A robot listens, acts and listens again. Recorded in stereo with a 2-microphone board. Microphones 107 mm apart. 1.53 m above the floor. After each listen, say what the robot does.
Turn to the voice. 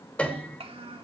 Turn 70° right.
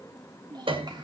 Turn 45° right.
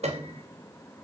Keep listening.
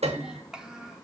Facing the child speaking, 2 to 4 m away.